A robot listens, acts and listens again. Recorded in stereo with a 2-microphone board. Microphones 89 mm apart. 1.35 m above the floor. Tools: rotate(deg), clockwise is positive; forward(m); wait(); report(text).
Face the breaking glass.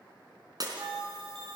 rotate(45)
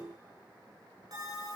wait()
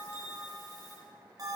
report("I heard breaking glass, but can't make it out now. It was about straight ahead or 90° right.")